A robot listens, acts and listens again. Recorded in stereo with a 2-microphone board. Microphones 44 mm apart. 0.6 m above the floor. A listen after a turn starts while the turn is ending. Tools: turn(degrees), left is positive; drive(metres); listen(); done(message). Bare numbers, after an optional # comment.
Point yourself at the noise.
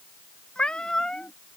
# The cat meowing: about 15° left or 165° left.
turn(15)
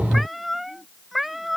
turn(-30)
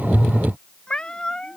# So it is at 15° left.
turn(15)
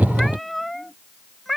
done("Found it: a cat meowing, straight ahead.")